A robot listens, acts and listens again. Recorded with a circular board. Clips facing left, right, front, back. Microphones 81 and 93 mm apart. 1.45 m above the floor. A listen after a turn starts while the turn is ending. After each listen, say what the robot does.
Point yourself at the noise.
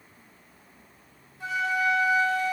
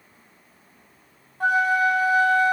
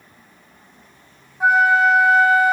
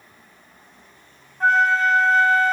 Turn 75° right.
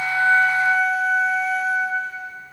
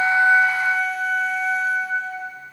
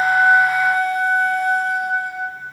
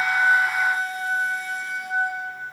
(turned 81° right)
Facing the flute, 2 to 4 m away.